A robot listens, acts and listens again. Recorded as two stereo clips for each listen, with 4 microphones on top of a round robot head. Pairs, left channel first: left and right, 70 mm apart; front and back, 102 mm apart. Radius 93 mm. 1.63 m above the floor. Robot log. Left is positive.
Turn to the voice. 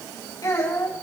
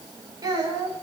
note: The child speaking: 130° left.
cmd yaw +130
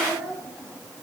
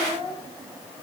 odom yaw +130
end: Facing the child speaking, over 4 m away.